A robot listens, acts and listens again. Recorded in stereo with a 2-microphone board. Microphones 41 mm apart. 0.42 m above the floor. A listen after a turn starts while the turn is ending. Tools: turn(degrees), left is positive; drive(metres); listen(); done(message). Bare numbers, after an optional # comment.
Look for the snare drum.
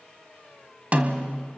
# The snare drum: about 35° right or 145° right.
turn(-35)
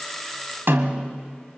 # So it is at 110° right.
turn(-110)
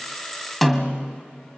done("Facing the snare drum, 1 to 2 m away.")